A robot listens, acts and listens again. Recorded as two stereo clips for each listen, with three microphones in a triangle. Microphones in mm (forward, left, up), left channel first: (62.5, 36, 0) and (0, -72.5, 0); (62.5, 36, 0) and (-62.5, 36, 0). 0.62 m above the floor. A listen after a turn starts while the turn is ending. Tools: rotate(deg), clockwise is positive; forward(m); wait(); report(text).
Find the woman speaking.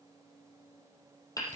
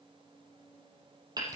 wait()
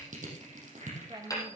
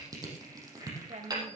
rotate(175)
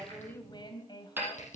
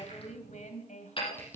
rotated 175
report("Found it: a woman speaking, straight ahead, 2 to 4 m away.")